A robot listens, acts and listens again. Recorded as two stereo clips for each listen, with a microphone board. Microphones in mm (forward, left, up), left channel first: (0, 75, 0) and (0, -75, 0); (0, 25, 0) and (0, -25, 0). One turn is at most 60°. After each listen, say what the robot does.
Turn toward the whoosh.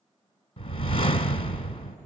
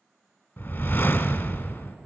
Turn 40° left.
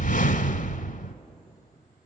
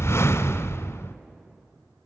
Turn 60° left.
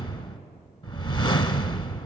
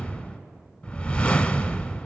Turn 35° left.
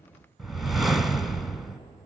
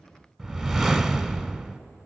Facing the whoosh, 1 to 2 m away.